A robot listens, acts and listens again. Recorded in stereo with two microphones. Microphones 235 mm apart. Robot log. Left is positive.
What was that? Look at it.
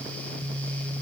cmd idle
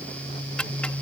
cmd yaw +30
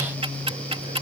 note: So it is at 25° right.
cmd yaw -25
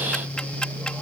end: Facing the ticking.